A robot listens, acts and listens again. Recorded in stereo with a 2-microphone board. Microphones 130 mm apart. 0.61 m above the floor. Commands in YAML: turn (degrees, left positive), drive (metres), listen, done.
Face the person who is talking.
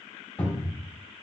listen: true
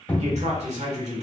turn: -60
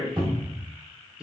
done: "Found it: a man speaking, straight ahead, 1 to 2 m away."